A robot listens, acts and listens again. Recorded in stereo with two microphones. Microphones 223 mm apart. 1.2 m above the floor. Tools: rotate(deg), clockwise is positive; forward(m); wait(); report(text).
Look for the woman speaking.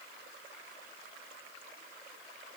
wait()
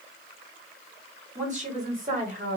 rotate(35)
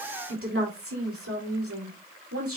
rotate(95)
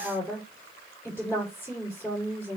rotate(-10)
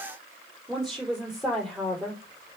report("Found it: a woman speaking, straight ahead.")